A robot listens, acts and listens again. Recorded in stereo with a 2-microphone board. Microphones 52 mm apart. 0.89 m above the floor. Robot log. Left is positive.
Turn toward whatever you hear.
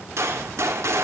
cmd yaw -90
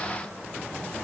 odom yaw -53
note: Nothing new. It was at 35° right.
cmd yaw -35
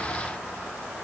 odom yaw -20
note: Nothing new. It was at 15° right.
cmd yaw -15
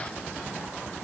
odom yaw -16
end: Facing where the gunshot came from. I can't hear it now.